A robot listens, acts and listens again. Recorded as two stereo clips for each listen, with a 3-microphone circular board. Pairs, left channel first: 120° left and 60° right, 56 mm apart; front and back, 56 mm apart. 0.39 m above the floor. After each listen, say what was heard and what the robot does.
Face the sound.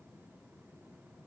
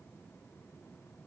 Keep listening.
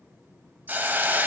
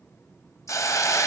Found it: a hiss, straight ahead, 1 to 2 m away.